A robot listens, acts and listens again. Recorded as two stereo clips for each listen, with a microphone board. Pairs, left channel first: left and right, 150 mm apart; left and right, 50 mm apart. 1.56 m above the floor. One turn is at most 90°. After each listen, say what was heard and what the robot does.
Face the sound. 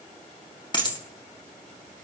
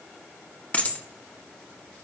The dropped coin: about 30° left or 150° left. Turn 30° left.
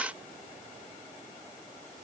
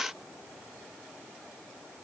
Keep listening.
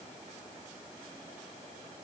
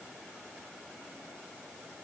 I heard a dropped coin, but can't make it out now. It was about straight ahead or 120° left.